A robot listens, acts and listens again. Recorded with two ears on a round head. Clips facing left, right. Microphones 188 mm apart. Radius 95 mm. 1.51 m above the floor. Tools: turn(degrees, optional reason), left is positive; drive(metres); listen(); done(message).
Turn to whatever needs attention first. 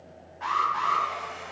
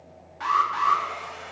turn(degrees=-90)
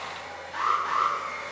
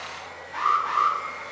done("Facing the alarm.")